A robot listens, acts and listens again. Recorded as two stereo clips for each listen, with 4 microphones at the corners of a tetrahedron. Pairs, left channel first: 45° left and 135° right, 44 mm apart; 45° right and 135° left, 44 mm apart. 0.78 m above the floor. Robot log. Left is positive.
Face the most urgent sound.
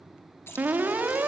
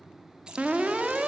note: The alarm: 170° right.
cmd yaw -170
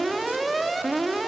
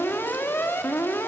note: The alarm is now 45° right.
cmd yaw -45
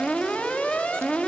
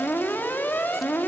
note: The alarm is now 10° right.
cmd yaw -10
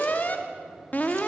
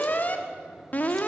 end: Found it: an alarm, straight ahead.